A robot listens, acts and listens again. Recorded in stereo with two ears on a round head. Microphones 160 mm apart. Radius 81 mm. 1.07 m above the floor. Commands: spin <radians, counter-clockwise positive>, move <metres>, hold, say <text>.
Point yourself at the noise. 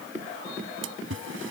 spin -1.57
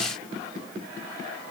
say I heard a splash from this way, but can't make it out now.